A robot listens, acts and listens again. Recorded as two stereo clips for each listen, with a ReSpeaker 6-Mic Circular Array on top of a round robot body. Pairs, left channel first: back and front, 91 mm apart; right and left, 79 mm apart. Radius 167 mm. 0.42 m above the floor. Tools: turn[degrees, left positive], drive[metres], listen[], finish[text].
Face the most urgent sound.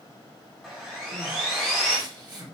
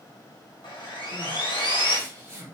Thought: The crying: 40° left.
Action: turn[40]
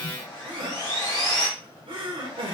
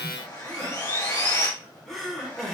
Action: finish[Found it: crying, straight ahead.]